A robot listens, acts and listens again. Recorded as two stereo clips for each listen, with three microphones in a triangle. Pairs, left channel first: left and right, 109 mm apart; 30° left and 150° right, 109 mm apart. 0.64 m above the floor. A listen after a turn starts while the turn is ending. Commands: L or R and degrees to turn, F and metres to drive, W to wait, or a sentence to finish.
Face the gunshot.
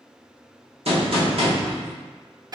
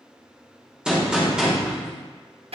R70
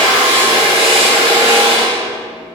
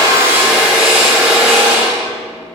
Facing where the gunshot came from. I can't hear it now.